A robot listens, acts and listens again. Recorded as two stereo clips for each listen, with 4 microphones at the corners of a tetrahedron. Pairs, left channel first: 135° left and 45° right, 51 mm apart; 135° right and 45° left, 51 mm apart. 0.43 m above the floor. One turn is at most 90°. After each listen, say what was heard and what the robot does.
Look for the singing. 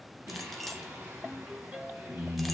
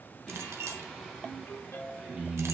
The singing: 35° right. Turn 35° right.
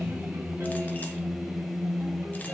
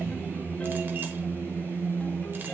The singing is now 35° left. Turn 35° left.
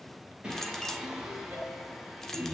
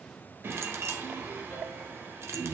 The singing is now 35° left. Turn 35° left.
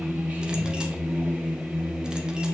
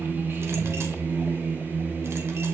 Facing the singing, 2 to 4 m away.